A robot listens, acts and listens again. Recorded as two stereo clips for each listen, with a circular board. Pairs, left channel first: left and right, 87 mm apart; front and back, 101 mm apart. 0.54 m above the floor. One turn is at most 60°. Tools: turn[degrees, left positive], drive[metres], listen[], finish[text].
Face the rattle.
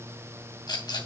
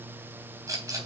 Thought: The rattle: 125° left.
Action: turn[60]
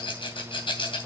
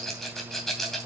Thought: The rattle is now 85° left.
Action: turn[60]
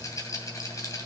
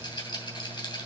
Thought: The rattle is now 40° left.
Action: turn[40]
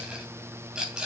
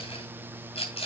Thought: The rattle is now 10° right.
Action: turn[-10]
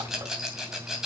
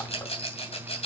Action: finish[Facing the rattle.]